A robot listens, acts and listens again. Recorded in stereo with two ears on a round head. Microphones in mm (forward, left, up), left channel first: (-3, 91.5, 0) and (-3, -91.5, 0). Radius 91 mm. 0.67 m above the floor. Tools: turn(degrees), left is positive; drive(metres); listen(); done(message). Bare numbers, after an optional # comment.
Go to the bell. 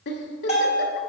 # The bell: about 35° left or 145° left.
turn(35)
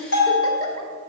# So it is at 100° left.
turn(100)
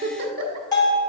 # The bell is now 20° left.
turn(20)
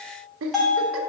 drive(1.0)
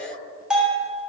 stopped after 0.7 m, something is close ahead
done("Arrived at the bell, straight ahead.")